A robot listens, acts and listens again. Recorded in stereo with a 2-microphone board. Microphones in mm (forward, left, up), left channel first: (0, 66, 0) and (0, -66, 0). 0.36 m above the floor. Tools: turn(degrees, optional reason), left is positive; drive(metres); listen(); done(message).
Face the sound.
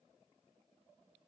listen()
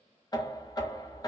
turn(degrees=30, reason="The knocking: about 30° left or 150° left.")
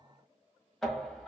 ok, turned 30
done("Found it: knocking, straight ahead.")